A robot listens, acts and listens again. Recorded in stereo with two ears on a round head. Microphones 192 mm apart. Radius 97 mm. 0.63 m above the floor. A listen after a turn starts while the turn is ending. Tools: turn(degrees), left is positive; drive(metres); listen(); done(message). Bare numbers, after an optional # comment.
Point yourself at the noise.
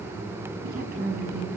# The woman speaking: about 45° right or 135° right.
turn(-45)
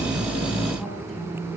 done("Facing the woman speaking.")